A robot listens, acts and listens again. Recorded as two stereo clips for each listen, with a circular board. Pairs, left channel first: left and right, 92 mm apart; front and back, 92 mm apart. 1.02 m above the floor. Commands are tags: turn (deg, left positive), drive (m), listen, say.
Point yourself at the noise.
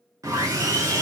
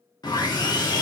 <turn deg="-40"/>
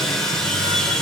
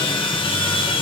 <say>Facing the sawing.</say>